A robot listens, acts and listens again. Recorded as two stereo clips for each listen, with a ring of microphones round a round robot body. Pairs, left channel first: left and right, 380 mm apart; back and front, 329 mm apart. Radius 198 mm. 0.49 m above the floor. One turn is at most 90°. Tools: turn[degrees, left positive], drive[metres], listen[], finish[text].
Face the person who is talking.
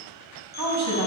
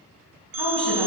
Thought: The woman speaking: 45° right.
Action: turn[-45]
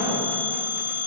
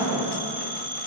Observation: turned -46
Action: finish[Found it: a woman speaking, straight ahead.]